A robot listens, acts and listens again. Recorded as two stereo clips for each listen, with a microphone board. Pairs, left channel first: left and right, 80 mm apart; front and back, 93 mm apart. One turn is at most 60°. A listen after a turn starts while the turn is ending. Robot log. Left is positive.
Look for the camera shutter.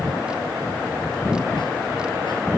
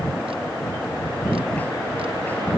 cmd idle
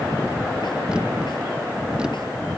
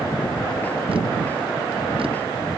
cmd idle
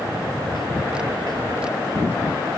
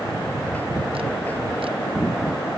end: I can't make out a camera shutter.